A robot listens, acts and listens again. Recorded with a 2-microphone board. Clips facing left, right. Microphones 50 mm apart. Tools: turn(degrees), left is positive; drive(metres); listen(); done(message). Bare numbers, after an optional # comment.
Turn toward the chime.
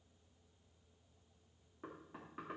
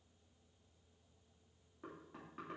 listen()
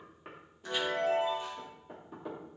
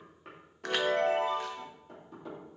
# The chime: about 70° right or 110° right.
turn(-70)
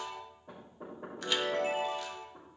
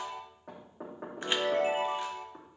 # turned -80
# So it is at 25° right.
turn(-25)
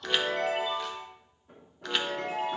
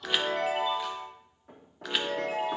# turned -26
done("Facing the chime.")